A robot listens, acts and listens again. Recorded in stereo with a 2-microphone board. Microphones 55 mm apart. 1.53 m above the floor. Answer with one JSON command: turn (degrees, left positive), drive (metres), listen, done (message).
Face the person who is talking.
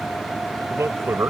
{"turn": -60}
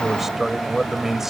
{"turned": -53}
{"done": "Facing the man speaking."}